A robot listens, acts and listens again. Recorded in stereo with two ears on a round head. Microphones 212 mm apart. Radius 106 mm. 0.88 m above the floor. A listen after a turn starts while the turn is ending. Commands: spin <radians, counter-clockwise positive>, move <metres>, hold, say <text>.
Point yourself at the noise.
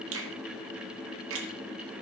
spin -1.05
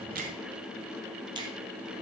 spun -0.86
spin -0.35
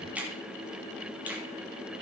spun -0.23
say Facing the finger snap.